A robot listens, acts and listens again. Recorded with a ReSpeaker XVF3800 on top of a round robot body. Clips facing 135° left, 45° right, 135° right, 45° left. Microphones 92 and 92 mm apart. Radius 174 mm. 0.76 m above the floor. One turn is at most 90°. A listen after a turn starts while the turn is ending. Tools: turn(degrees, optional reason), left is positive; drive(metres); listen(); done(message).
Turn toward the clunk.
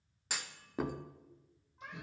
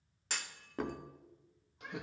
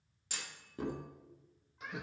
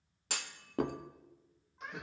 turn(degrees=50, reason="The clunk: 50° left.")
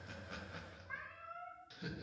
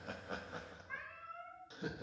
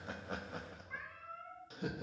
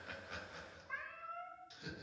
done("I heard a clunk from this way, but can't make it out now.")